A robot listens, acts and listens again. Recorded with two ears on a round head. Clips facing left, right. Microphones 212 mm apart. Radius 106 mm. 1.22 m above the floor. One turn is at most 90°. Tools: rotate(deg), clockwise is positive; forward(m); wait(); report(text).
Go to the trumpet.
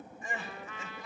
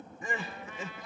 rotate(-65)
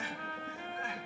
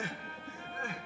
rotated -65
rotate(-50)
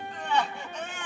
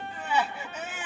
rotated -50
wait()
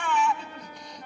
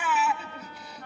rotate(-15)
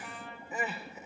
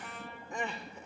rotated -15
forward(1.0)
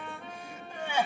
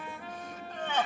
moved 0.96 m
forward(1.0)
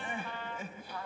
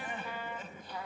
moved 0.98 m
rotate(10)
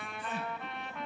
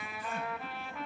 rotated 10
forward(1.0)
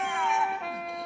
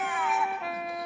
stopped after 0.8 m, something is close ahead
report("I am next to the trumpet.")